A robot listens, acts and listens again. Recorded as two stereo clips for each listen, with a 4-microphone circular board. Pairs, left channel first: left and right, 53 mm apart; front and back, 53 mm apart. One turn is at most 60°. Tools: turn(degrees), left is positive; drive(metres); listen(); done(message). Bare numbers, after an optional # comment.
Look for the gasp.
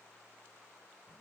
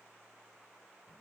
listen()
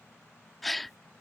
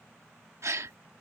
# The gasp: straight behind.
turn(60)
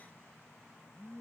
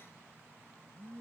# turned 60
# Nothing new. It was at 120° left.
turn(60)
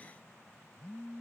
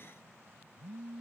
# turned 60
# Nothing new. It was at 60° left.
turn(60)
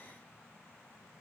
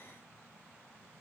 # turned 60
done("Facing where the gasp came from. I can't hear it now.")